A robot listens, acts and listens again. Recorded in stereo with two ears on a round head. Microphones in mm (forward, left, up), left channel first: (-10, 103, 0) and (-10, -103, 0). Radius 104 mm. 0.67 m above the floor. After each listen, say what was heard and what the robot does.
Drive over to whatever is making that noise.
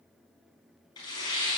The tearing paper: about 20° left or 160° left. Turn 20° left.
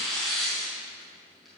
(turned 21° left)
Drive 1.0 m forward.
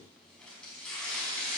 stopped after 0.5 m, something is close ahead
Something is in my way. I am facing the tearing paper but have not reached it.